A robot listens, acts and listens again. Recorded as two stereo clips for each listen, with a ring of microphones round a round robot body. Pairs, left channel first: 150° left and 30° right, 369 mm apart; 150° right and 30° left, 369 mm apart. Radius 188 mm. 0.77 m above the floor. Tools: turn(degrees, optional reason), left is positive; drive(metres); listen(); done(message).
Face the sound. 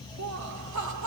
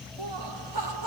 turn(degrees=15, reason="The laughter: 15° left.")
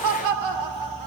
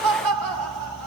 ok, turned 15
turn(degrees=-10, reason="The laughter is now 10° right.")
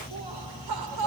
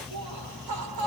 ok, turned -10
done("Facing the laughter.")